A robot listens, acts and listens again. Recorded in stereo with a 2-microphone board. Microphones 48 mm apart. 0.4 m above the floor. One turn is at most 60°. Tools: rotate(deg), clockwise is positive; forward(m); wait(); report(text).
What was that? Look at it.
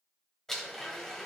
rotate(-30)
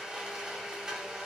rotate(20)
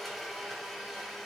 report("Found it: a blender, straight ahead.")